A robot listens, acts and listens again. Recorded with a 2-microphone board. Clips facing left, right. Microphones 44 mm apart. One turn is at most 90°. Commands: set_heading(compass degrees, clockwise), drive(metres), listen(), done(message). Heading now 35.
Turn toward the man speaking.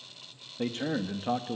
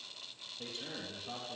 set_heading(340)
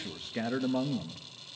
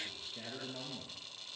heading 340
set_heading(275)
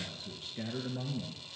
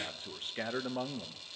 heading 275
set_heading(330)
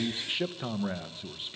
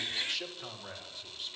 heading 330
set_heading(305)
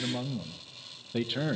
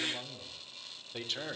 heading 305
set_heading(290)
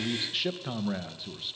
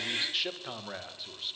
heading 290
done("Facing the man speaking.")